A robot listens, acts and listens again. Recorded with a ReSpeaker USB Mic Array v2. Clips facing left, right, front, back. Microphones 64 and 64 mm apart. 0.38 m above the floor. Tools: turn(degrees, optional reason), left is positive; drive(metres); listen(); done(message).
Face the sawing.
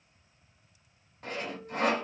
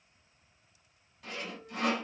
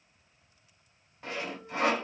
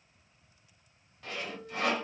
turn(degrees=60, reason="The sawing: 60° left.")
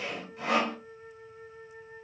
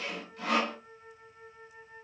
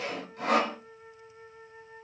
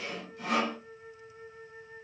turn(degrees=25, reason="The sawing is now 25° left.")
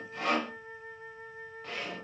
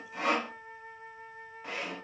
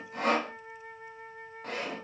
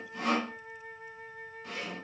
turn(degrees=-15, reason="The sawing is now 15° right.")
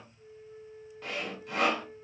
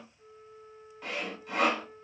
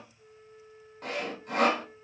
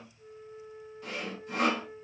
done("Facing the sawing.")